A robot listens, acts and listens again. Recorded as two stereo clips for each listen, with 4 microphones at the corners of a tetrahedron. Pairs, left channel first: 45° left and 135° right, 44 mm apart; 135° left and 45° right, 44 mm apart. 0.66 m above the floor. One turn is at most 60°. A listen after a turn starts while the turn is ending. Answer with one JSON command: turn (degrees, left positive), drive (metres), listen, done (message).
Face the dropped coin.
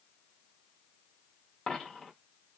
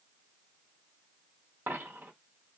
{"turn": -25}
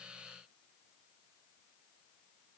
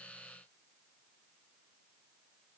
{"done": "Facing where the dropped coin came from. I can't hear it now."}